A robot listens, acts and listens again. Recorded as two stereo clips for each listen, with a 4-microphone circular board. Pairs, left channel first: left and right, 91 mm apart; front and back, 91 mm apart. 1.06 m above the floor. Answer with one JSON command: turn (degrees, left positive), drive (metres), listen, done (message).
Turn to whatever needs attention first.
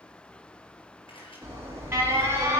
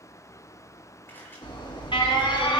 {"turn": -30}
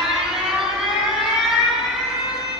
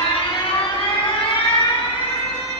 {"done": "Found it: an alarm, straight ahead, 2 to 4 m away."}